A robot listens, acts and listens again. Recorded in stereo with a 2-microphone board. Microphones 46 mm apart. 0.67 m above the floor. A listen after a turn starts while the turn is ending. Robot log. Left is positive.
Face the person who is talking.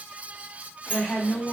cmd yaw -30
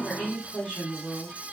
note: So it is at 20° left.
cmd yaw +20
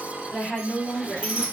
end: Found it: a woman speaking, straight ahead.